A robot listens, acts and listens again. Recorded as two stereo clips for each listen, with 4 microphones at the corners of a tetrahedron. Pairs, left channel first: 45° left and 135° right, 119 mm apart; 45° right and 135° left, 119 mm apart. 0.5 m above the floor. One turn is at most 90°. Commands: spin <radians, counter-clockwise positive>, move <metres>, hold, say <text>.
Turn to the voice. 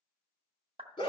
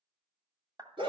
hold
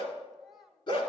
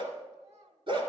spin 1.57
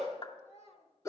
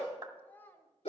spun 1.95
spin 0.52
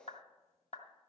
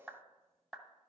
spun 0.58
hold
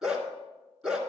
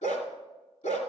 hold
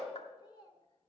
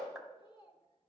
say Facing the child speaking.